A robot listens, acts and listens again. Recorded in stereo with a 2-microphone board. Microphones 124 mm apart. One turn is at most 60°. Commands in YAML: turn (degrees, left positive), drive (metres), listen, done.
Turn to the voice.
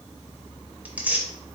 listen: true
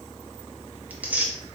listen: true
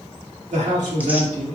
turn: -60
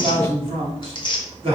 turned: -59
turn: -45
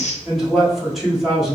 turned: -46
done: "Facing the man speaking."